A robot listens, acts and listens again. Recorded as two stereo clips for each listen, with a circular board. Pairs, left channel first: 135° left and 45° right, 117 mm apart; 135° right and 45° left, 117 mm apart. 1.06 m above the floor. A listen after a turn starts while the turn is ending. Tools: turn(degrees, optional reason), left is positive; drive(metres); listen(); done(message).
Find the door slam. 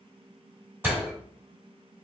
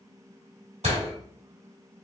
turn(degrees=25, reason="The door slam: 25° left.")
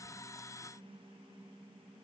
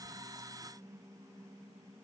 done("I heard a door slam from this way, but can't make it out now.")